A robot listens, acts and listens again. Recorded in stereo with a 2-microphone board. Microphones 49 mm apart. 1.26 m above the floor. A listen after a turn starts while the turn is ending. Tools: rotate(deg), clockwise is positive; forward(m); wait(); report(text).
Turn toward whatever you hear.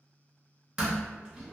rotate(15)
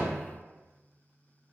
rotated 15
wait()
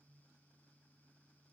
report("I heard a door slam, but can't make it out now. It was about straight ahead or 150° right.")